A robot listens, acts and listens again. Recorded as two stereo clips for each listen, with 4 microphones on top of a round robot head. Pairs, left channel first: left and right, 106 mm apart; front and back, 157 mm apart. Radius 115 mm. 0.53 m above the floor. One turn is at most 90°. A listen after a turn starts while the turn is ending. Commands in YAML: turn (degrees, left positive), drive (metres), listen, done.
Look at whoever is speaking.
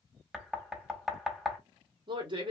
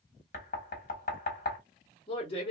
turn: -55
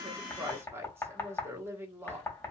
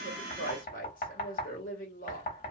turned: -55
turn: -25
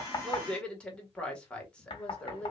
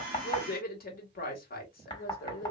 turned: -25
turn: 10
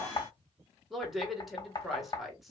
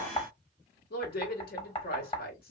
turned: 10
done: "Found it: a woman speaking, straight ahead, 1 to 2 m away."